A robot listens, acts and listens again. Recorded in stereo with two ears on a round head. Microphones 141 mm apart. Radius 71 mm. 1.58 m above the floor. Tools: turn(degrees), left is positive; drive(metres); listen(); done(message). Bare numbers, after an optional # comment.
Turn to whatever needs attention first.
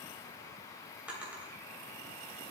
listen()
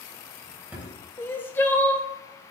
turn(30)
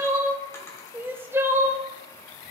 # So it is at 15° right.
turn(-15)
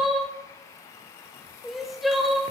done("Facing the crying.")